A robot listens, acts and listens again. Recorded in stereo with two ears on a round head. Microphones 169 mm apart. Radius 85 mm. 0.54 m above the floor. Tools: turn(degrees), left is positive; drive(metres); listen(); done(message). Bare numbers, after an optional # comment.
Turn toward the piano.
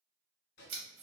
listen()
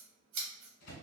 listen()
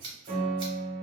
# The piano: about 45° right or 135° right.
turn(-45)
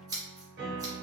# So it is at 80° right.
turn(-80)
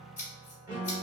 # The piano is now 20° right.
turn(-20)
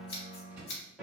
done("Facing the piano.")